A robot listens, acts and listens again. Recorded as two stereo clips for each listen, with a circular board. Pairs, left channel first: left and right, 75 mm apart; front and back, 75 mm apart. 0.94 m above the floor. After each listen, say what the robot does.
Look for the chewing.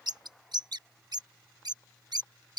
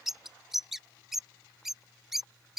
Keep listening.
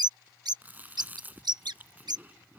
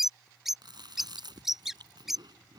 Turn 155° right.
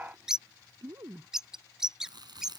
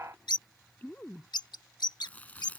Turn 70° right.
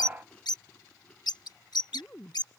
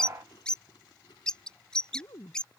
Turn 15° left.
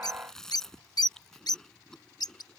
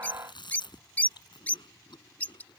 Found it: chewing, straight ahead.